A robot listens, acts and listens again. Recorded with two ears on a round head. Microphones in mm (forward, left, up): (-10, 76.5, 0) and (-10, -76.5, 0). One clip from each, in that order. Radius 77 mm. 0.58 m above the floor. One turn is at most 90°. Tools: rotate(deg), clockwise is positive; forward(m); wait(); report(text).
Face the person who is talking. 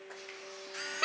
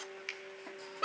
wait()
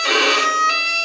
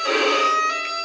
wait()
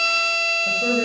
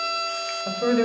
rotate(45)
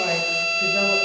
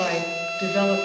rotate(90)
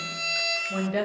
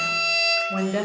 rotate(15)
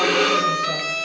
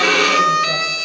wait()
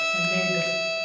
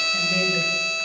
wait()
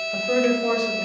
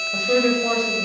report("Facing the woman speaking.")